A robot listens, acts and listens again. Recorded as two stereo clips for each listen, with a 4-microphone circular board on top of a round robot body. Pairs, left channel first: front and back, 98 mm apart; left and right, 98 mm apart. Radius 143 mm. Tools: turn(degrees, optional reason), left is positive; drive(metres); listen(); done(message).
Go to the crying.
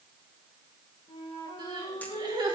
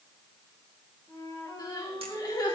turn(degrees=140, reason="The crying: 140° left.")
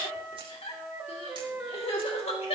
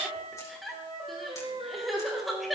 drive(metres=1.0)
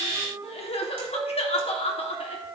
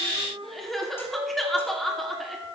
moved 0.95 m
drive(metres=1.0)
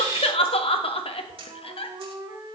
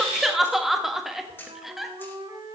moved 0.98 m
drive(metres=1.0)
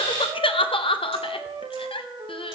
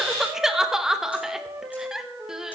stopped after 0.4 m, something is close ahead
done("Arrived at the crying, straight ahead.")